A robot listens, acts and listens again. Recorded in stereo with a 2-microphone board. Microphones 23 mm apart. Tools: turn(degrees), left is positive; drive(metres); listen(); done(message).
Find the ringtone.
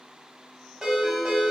turn(degrees=-30)
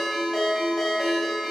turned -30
done("Facing the ringtone.")